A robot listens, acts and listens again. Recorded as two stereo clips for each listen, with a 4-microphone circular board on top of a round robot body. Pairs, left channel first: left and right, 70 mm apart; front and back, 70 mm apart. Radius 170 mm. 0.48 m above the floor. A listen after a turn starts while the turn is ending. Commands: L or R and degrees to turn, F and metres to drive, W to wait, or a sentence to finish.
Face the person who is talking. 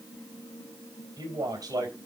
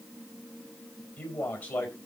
R65
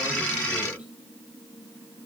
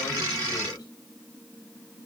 W
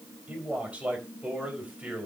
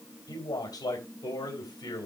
R15
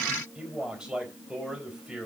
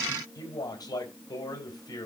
R10
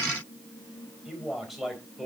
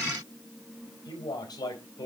Found it: a man speaking, straight ahead.